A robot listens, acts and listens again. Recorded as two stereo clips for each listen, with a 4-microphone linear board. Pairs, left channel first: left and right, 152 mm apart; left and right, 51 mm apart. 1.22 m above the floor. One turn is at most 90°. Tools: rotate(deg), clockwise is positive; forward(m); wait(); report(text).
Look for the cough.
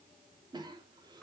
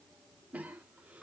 rotate(30)
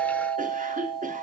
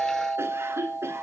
rotate(90)
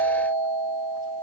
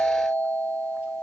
rotate(30)
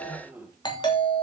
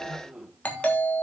rotate(10)
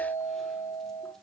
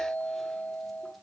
wait()
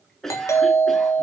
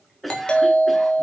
report("Facing the cough, 2 to 4 m away.")